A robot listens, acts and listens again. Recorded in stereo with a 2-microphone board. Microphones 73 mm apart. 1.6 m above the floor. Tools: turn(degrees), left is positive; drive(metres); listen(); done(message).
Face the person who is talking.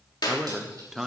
turn(degrees=30)
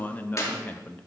turn(degrees=155)
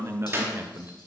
turn(degrees=-35)
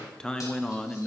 turn(degrees=10)
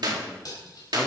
listen()
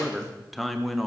done("Facing the man speaking, under 1 m away.")